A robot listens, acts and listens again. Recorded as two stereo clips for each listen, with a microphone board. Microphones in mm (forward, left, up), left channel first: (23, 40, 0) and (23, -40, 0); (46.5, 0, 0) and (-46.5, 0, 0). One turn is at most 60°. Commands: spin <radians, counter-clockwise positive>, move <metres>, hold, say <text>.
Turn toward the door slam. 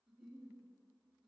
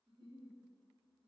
hold
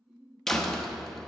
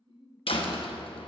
say Found it: a door slam, straight ahead, under 1 m away.